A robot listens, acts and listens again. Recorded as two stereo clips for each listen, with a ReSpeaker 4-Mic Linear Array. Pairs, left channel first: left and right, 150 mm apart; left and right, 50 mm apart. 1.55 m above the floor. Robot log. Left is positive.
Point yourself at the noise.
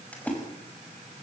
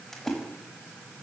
cmd yaw +30
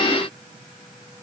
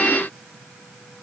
cmd idle
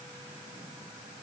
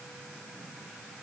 end: I heard a splash, but can't make it out now. It was about 20° right or 140° left.